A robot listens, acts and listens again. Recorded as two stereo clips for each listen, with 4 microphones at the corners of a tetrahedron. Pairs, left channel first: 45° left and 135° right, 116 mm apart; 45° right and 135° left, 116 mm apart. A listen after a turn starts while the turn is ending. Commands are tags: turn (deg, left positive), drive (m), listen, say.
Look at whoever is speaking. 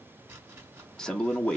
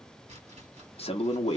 <turn deg="-40"/>
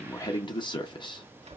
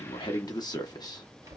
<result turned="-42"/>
<say>Facing the man speaking, under 1 m away.</say>